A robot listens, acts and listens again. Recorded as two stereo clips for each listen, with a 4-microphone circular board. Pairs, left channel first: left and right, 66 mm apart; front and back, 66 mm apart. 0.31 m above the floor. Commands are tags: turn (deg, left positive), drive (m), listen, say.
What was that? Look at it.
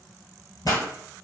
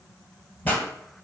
<turn deg="65"/>
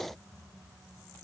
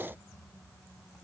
<say>Facing where the pop came from. I can't hear it now.</say>